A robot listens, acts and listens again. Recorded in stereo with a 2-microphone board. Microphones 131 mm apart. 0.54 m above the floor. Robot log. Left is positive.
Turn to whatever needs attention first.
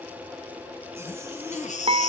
note: The baby crying: about 70° left or 110° left.
cmd yaw +70
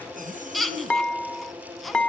end: Found it: a baby crying, straight ahead.